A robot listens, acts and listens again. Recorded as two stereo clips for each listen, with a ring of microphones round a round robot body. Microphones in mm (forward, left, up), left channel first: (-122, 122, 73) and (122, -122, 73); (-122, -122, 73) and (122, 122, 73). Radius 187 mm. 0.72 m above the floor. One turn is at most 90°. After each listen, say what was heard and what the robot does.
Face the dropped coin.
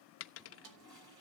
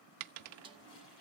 The dropped coin: 80° left. Turn 80° left.
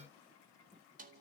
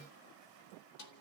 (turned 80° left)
I heard a dropped coin from this way, but can't make it out now.